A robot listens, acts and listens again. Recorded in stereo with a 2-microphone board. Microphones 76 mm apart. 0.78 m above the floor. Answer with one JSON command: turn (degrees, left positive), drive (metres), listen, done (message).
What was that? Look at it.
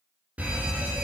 {"turn": -20}
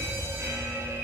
{"turn": -135}
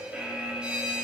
{"turn": -15}
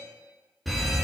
{"done": "Found it: a fire alarm, straight ahead."}